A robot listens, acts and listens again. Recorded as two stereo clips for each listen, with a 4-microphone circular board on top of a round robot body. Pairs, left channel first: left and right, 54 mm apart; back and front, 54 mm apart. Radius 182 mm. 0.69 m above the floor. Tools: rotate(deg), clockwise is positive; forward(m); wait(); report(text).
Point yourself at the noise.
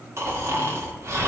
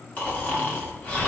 rotate(125)
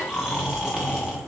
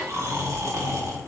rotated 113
rotate(10)
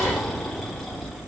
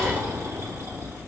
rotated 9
report("Found it: snoring, straight ahead, 1 to 2 m away.")